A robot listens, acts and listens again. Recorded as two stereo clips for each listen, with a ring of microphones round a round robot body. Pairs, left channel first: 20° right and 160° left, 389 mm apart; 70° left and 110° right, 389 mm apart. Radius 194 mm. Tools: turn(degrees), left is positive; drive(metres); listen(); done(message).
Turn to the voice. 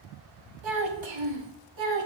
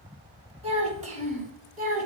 turn(degrees=180)
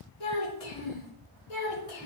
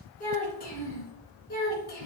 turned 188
done("Found it: a child speaking, straight ahead.")